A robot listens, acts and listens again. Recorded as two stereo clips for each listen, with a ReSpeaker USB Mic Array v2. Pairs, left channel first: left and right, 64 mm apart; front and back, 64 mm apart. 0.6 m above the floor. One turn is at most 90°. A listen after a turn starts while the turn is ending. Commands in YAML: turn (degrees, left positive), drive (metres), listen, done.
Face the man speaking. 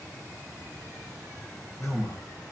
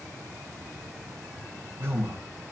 turn: 90
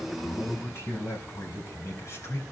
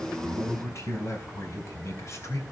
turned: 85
turn: 45
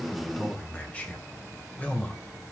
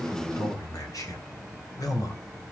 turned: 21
turn: 20
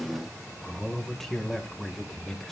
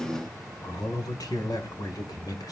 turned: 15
done: "Found it: a man speaking, straight ahead, 2 to 4 m away."